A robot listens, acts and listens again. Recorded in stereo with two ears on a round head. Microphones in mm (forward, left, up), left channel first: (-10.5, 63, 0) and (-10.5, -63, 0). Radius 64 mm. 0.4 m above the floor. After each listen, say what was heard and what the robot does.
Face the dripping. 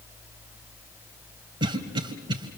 Keep listening.
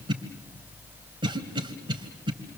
Keep listening.
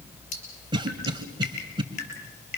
The dripping: about 55° left or 125° left. Turn 55° left.
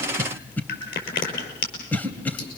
So it is at 70° left. Turn 70° left.
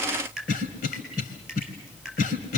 Found it: dripping, straight ahead.